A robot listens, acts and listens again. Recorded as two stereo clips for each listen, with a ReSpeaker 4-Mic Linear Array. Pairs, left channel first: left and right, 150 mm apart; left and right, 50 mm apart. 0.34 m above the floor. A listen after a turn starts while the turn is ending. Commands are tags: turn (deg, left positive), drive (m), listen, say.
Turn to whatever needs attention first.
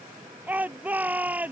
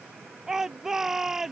<turn deg="-30"/>
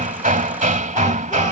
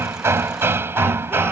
<listen/>
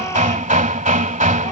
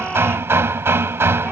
<listen/>
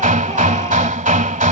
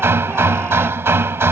<say>I heard a shout, but can't make it out now. It was about 20° left or 140° right.</say>